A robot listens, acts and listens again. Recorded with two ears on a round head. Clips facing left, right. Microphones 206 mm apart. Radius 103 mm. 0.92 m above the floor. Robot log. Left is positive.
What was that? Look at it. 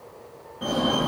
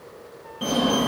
note: The fire alarm: about 45° right or 135° right.
cmd yaw -45
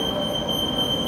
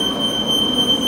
note: So it is at 85° right.
cmd yaw -85
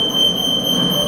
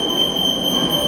end: Found it: a fire alarm, straight ahead.